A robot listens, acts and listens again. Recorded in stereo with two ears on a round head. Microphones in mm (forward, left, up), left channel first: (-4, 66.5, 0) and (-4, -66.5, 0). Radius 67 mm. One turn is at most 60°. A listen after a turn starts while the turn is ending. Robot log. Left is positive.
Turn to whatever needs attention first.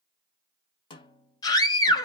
note: The scream: about 25° left or 155° left.
cmd yaw +25
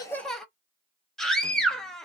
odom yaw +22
end: Found it: a scream, straight ahead, under 1 m away.